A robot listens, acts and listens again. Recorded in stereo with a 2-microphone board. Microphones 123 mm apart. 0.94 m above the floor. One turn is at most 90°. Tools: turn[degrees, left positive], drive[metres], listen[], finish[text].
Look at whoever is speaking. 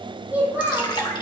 Action: turn[-30]
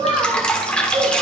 Thought: So it is at 135° right.
Action: turn[-90]
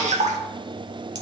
Thought: Nothing new. It was at 45° right.
Action: turn[-45]
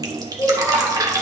Thought: The child speaking is now 20° left.
Action: turn[20]
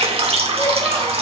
Action: listen[]
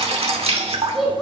Action: finish[Found it: a child speaking, straight ahead, 2 to 4 m away.]